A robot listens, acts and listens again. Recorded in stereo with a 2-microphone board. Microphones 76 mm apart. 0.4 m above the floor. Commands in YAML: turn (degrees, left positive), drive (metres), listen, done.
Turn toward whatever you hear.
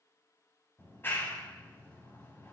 turn: 30
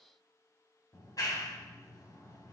turn: 120
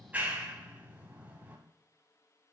turn: -25
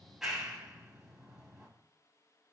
done: "Found it: a clap, straight ahead."